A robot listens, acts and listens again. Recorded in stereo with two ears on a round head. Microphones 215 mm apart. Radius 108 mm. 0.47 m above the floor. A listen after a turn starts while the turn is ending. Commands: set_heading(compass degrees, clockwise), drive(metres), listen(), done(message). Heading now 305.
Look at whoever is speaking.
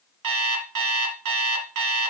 listen()
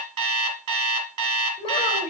set_heading(285)
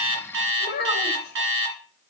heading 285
set_heading(150)
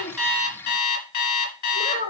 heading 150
set_heading(110)
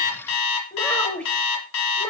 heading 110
done("Facing the child speaking.")